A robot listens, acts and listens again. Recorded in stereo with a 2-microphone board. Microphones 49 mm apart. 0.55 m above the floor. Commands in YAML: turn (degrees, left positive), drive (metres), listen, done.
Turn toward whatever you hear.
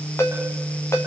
turn: 65
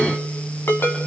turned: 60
turn: 50
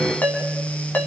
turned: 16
turn: 35
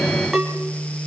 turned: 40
done: "Facing the ringtone."